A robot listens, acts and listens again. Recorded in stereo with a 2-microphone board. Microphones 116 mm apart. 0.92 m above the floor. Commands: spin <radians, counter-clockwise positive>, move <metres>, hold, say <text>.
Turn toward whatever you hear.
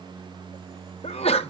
spin 1.05
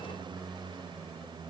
hold
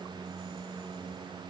say I heard a sneeze, but can't make it out now. It was about straight ahead or 60° left.